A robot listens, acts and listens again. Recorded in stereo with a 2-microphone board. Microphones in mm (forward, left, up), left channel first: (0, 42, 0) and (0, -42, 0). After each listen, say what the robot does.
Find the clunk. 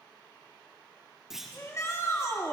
Turn 30° right.
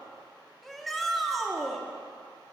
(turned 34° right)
Keep listening.
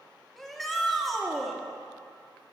I heard a clunk, but can't make it out now. It was about 30° left or 140° right.